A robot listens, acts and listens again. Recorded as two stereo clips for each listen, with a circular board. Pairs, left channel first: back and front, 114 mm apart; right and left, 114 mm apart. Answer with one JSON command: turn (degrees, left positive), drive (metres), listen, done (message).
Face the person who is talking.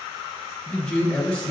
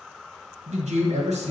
{"turn": 110}
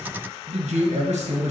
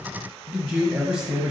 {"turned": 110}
{"turn": 15}
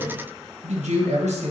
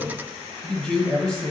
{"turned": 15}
{"done": "Found it: a man speaking, straight ahead."}